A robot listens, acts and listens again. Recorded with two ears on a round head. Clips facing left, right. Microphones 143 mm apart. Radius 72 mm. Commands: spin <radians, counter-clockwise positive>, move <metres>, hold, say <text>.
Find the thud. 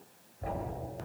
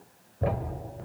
spin -1.31
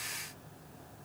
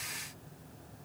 hold
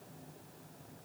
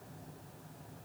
say I heard a thud, but can't make it out now. It was about straight ahead or 30° right.